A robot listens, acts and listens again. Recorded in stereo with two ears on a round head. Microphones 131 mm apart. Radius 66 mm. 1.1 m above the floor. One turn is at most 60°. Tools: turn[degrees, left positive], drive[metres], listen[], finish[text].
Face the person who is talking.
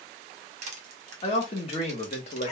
Thought: The man speaking: about 45° left or 135° left.
Action: turn[45]
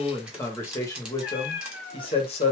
Thought: So it is at 40° left.
Action: turn[40]
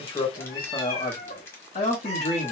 Thought: The man speaking is now 40° left.
Action: turn[40]
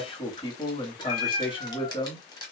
Thought: The man speaking is now 30° left.
Action: turn[30]
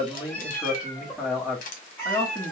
Action: finish[Facing the man speaking.]